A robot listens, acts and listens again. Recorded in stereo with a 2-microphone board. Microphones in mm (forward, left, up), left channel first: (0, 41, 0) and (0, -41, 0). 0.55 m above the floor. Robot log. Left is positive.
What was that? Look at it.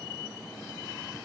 cmd idle
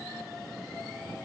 cmd idle
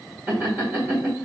note: The laughter: about 30° right or 150° right.
cmd yaw -30
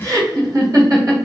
note: So it is at 120° right.
cmd yaw -120
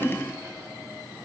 cmd idle
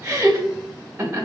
note: The laughter is now 25° right.
cmd yaw -25
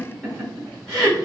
end: Found it: laughter, straight ahead, 1 to 2 m away.